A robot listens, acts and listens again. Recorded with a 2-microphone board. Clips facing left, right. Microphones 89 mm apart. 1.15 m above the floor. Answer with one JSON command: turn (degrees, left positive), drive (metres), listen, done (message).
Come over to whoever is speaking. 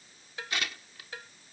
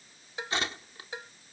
{"listen": true}
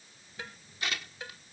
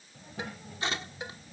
{"turn": -90}
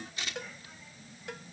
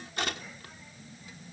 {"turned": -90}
{"drive": 1.0}
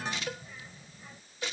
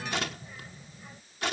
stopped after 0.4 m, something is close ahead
{"turn": -10}
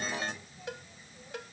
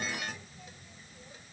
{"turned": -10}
{"done": "Blocked. The child speaking is further on, straight ahead."}